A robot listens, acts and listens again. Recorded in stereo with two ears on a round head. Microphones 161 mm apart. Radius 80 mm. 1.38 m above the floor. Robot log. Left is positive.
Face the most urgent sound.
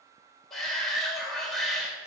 cmd yaw +30
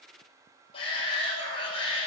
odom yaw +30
note: So it is at 150° left.
cmd yaw +150
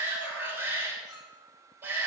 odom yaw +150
note: The shout is now 10° right.
cmd yaw -10
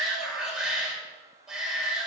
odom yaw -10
end: Facing the shout, over 4 m away.